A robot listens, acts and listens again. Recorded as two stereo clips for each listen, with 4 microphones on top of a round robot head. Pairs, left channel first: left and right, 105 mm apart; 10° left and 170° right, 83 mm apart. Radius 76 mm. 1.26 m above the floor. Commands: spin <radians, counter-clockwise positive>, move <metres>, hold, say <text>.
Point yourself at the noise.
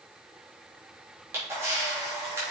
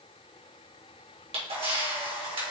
spin -2.79
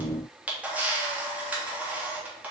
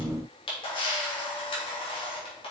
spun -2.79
spin -0.26
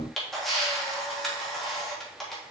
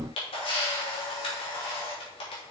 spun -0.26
say Found it: a camera shutter, straight ahead.